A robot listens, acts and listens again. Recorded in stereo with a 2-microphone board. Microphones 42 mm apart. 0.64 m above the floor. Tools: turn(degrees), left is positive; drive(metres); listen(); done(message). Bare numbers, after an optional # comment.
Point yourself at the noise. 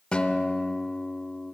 # The guitar: about 25° left or 155° left.
turn(25)
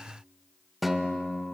done("Found it: a guitar, straight ahead.")